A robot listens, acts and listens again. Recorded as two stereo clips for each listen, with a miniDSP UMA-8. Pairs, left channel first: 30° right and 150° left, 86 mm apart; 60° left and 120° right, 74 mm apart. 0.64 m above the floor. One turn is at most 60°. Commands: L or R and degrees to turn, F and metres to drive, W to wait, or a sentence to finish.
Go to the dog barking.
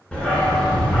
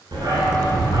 R60
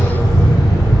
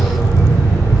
R60
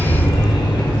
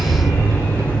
R10
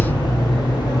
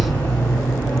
F1.0
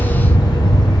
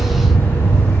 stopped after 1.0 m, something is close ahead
I am next to the dog barking.